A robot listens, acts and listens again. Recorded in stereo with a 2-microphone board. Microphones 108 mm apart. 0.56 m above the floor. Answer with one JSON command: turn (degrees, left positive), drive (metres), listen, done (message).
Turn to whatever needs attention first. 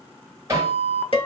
{"turn": 20}
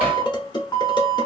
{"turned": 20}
{"turn": 140}
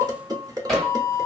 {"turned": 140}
{"turn": -50}
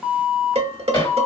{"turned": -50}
{"done": "Found it: an alarm, straight ahead."}